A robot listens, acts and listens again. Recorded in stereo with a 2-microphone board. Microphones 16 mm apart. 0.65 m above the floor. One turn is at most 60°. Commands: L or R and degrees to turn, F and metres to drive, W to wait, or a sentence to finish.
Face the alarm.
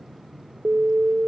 R60
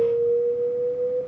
R15
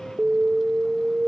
Found it: an alarm, straight ahead.